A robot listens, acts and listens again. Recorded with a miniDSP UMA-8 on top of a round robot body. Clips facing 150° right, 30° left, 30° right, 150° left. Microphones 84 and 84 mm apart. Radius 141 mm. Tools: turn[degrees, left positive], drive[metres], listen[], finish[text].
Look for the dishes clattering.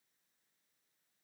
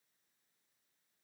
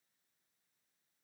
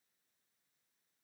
Action: listen[]
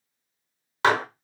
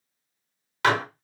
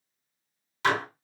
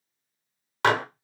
Thought: The dishes clattering: 155° left.
Action: turn[155]
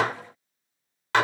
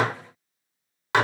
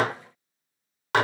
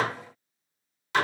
Thought: The dishes clattering is now 45° right.
Action: turn[-45]
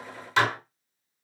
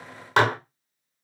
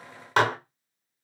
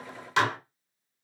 Action: finish[Found it: dishes clattering, straight ahead.]